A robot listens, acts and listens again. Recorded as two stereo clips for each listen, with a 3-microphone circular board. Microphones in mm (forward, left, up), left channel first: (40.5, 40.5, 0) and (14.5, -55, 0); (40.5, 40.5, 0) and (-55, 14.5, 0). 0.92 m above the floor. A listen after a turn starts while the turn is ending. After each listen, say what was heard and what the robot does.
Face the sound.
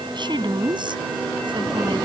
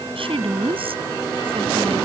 The woman speaking: 145° right. Turn 145° right.
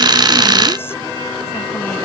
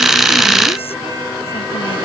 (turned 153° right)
Nothing new. It was at 10° left. Turn 10° left.
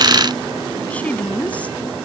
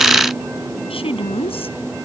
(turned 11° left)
Facing the woman speaking.